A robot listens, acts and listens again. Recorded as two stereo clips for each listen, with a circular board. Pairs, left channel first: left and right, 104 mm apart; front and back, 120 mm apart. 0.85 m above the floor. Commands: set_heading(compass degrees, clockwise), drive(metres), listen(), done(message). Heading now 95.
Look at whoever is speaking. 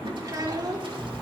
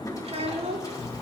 set_heading(240)
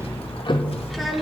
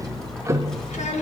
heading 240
listen()
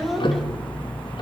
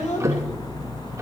done("Facing the child speaking.")